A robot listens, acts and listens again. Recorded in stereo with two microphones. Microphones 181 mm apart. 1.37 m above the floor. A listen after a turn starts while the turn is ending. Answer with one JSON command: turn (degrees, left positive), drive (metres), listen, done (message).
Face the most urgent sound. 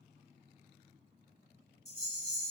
{"listen": true}
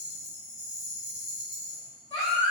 {"turn": 35}
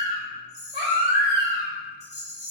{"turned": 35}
{"turn": 110}
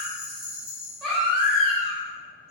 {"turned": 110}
{"done": "Found it: a baby crying, straight ahead, 1 to 2 m away."}